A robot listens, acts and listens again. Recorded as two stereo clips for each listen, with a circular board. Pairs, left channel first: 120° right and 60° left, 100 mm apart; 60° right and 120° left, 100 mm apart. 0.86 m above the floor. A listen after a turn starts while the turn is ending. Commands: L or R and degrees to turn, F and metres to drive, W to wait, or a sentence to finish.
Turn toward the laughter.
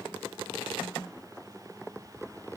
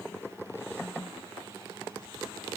W
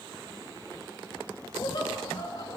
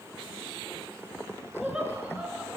R165
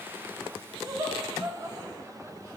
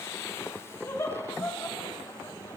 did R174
Facing the laughter.